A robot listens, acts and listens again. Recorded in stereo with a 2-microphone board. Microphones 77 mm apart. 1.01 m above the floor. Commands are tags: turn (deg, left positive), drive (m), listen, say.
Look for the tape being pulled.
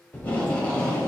<turn deg="20"/>
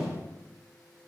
<listen/>
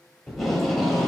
<say>Facing the tape being pulled, 2 to 4 m away.</say>